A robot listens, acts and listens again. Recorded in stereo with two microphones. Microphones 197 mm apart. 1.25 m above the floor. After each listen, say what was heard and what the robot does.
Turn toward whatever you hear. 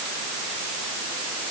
Keep listening.
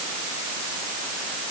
Keep listening.
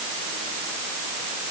I can't make out anything.